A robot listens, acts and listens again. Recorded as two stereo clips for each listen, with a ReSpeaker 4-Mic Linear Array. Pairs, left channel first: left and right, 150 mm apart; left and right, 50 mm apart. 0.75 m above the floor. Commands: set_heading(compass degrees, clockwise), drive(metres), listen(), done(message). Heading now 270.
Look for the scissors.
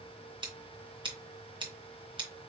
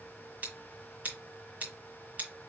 set_heading(305)
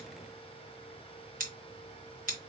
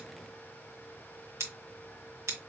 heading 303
set_heading(58)
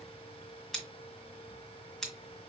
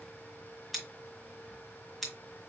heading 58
done("Found it: scissors, straight ahead.")